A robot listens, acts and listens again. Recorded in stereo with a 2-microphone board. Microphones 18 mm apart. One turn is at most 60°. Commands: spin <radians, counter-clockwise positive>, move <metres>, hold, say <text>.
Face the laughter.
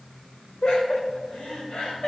spin 1.05
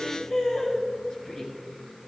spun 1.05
spin 0.70
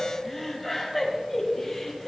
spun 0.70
say Found it: laughter, straight ahead.